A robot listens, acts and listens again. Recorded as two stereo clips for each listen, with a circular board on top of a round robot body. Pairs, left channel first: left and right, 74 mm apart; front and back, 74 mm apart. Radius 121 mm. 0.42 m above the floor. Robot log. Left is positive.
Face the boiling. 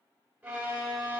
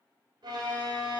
cmd idle
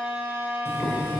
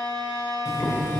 note: The boiling: 40° left.
cmd yaw +40
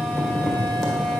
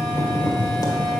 end: Facing the boiling, 1 to 2 m away.